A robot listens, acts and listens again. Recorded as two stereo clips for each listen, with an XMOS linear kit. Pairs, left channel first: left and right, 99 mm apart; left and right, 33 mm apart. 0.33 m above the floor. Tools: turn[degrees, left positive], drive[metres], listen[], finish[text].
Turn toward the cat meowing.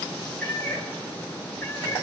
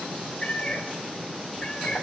Thought: The cat meowing: about 25° left or 155° left.
Action: turn[25]
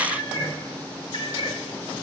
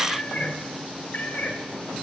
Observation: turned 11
Thought: The cat meowing: about 50° left or 130° left.
Action: turn[50]
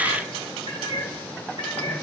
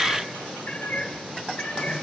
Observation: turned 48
Thought: So it is at 70° left.
Action: turn[70]
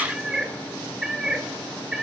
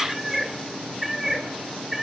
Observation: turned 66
Action: finish[Found it: a cat meowing, straight ahead.]